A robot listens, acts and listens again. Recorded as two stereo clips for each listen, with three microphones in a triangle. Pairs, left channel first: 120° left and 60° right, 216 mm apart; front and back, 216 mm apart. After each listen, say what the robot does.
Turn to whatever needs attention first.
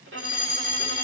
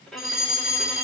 Facing the fire alarm.